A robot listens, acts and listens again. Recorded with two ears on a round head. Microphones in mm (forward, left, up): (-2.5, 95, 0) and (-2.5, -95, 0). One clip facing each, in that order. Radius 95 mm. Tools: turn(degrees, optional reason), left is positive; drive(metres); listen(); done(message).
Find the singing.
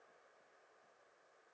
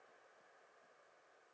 listen()
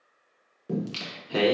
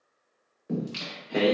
turn(degrees=50, reason="The singing: about 50° left or 130° left.")
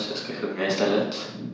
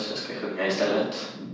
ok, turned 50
turn(degrees=45, reason="So it is at 45° left.")
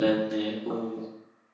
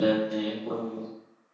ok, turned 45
turn(degrees=30, reason="The singing is now 30° left.")
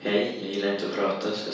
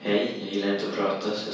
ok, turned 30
turn(degrees=10, reason="The singing is now 10° left.")
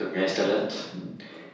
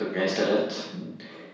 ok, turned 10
done("Facing the singing.")